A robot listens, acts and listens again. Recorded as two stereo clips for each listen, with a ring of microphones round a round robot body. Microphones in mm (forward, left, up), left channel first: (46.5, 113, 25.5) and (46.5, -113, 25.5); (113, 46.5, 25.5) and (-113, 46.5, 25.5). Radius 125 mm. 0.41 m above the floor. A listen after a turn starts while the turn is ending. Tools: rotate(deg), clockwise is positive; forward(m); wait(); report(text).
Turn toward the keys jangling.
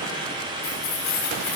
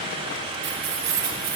rotate(-135)
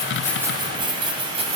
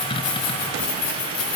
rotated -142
rotate(30)
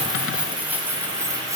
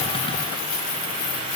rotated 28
rotate(15)
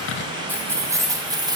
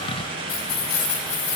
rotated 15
rotate(20)
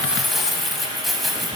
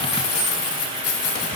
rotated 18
report("Found it: keys jangling, straight ahead, 2 to 4 m away.")